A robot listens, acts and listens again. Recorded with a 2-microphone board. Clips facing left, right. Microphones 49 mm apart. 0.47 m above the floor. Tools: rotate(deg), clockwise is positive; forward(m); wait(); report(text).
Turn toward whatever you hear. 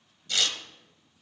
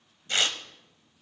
rotate(35)
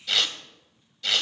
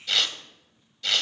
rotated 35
report("Found it: tearing paper, straight ahead.")